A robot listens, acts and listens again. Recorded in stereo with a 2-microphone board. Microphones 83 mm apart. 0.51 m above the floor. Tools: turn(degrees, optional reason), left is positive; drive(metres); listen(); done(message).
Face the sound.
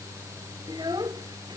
turn(degrees=-60, reason="The child speaking: about 60° right or 120° right.")
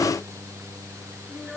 listen()
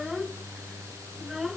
done("Facing the child speaking.")